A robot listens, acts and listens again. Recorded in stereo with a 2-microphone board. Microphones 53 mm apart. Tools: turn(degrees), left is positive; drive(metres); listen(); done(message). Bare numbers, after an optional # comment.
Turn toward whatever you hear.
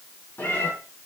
# The cat meowing: about 45° left or 135° left.
turn(45)
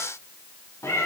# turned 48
# So it is at 60° left.
turn(60)
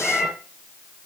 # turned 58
# The cat meowing is now 10° right.
turn(-10)
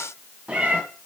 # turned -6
# The cat meowing is now 25° right.
turn(-25)
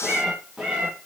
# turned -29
# The cat meowing is now 15° right.
turn(-15)
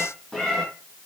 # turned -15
done("Facing the cat meowing.")